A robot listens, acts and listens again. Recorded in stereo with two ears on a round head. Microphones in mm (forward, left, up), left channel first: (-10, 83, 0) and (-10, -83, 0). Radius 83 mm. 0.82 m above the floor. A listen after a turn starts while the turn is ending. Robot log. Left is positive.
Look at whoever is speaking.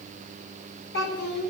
note: The child speaking: about 60° left or 120° left.
cmd yaw +60
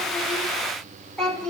end: Found it: a child speaking, straight ahead.